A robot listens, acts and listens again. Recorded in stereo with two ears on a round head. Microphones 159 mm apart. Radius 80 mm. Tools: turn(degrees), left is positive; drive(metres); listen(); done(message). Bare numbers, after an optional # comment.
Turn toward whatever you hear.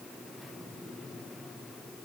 listen()
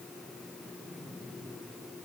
listen()
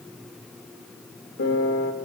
# The piano: about 65° left or 115° left.
turn(65)
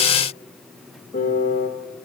# So it is at 45° left.
turn(45)
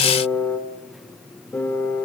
# The piano is now 10° left.
turn(10)
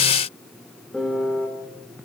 done("Found it: a piano, straight ahead, 2 to 4 m away.")